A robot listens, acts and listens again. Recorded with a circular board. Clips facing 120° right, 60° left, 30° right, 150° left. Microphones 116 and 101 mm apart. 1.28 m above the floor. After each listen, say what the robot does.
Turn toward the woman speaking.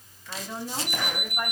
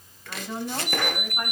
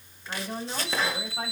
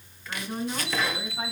Turn 15° right.
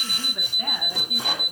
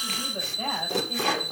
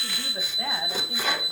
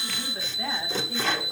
Keep listening.
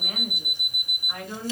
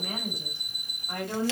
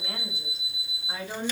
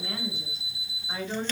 Turn 20° left.
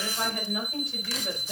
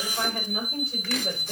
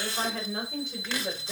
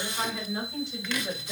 Turn 10° left.
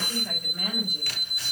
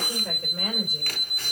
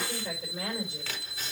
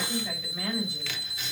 Found it: a woman speaking, straight ahead, over 4 m away.